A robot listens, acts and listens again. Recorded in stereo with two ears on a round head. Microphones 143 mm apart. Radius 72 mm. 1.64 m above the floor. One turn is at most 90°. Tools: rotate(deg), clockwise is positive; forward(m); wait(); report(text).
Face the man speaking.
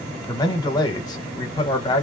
rotate(-25)
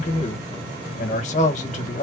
rotate(-90)
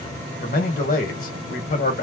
rotate(-60)
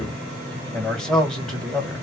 report("Facing the man speaking.")